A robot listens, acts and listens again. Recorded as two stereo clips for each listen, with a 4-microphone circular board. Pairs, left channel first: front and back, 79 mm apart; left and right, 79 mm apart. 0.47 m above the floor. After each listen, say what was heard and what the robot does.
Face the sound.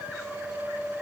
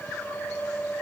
Keep listening.
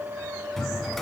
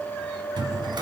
The drawer: 85° right. Turn 85° right.
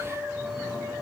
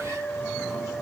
Keep listening.
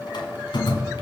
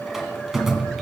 Found it: a drawer, straight ahead, 1 to 2 m away.